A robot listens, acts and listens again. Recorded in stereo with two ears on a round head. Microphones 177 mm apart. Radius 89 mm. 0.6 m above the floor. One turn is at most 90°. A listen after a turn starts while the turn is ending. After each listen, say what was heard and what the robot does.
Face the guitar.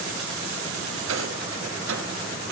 Keep listening.
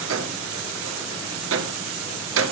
Keep listening.
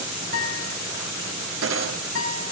The guitar: about 70° left or 110° left. Turn 70° left.
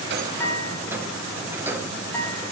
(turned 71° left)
So it is at 10° left. Turn 10° left.
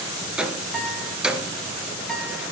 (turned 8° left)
Found it: a guitar, straight ahead, 2 to 4 m away.